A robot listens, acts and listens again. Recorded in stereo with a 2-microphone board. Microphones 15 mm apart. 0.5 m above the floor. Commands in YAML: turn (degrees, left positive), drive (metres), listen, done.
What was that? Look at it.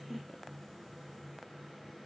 listen: true
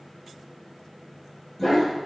turn: 40
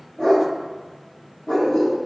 turn: 95
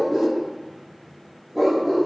turn: -20
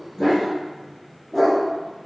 done: "Found it: a dog barking, straight ahead, over 4 m away."